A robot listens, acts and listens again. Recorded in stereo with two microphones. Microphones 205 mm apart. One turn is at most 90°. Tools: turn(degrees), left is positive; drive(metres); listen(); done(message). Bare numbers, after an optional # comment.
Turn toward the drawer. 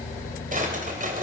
# The drawer: about 40° right or 140° right.
turn(-40)
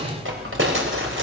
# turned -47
# So it is at 90° right.
turn(-90)
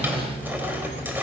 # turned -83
# Nothing new. It was at 10° right.
turn(-10)
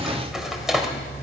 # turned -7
done("Facing the drawer.")